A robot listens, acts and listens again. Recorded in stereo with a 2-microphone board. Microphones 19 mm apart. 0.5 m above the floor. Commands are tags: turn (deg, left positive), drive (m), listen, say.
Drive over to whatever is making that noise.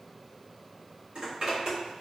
<turn deg="-55"/>
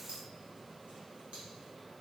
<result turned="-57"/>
<listen/>
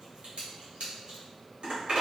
<turn deg="-70"/>
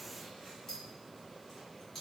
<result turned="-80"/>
<turn deg="10"/>
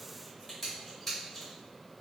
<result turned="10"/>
<drive m="1.0"/>
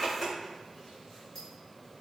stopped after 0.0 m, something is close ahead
<say>Something is in my way. I am facing the zipper but have not reached it.</say>